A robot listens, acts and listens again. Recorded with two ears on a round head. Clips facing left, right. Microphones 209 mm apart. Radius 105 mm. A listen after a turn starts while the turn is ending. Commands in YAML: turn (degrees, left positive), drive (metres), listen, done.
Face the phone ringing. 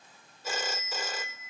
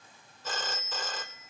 turn: 30
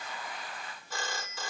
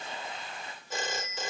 turn: -20
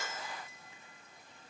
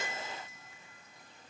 listen: true
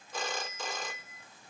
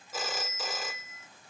done: "Facing the phone ringing."